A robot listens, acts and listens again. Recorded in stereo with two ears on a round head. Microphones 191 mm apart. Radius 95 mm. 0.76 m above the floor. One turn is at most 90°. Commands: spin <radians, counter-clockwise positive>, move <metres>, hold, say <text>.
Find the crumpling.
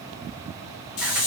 hold
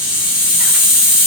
hold
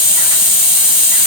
say I can't make out crumpling, only a hiss.